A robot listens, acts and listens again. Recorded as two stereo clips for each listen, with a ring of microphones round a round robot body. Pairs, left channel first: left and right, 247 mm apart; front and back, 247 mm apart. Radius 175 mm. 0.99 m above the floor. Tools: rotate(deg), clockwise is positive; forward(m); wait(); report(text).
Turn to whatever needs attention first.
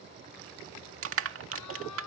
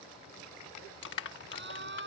rotate(-135)
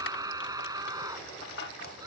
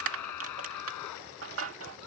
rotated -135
rotate(15)
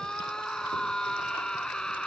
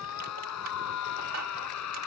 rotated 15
report("Found it: a scream, straight ahead.")